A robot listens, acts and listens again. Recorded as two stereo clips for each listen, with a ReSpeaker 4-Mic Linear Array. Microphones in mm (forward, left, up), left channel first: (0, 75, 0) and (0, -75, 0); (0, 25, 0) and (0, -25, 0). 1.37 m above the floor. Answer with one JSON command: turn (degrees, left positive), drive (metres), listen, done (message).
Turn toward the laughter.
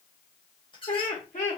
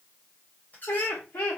{"turn": 60}
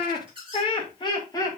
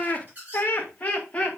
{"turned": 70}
{"turn": 25}
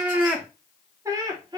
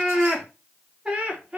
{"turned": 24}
{"turn": -30}
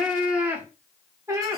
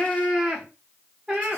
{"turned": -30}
{"turn": -20}
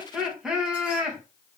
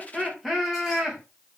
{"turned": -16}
{"done": "Found it: laughter, straight ahead, 1 to 2 m away."}